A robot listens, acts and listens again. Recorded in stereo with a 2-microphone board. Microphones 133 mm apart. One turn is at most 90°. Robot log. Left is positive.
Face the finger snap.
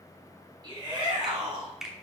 cmd yaw -30
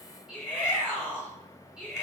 cmd idle
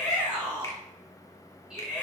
cmd idle
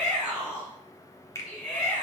note: So it is at 30° left.
cmd yaw +30
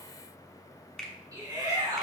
end: Facing the finger snap.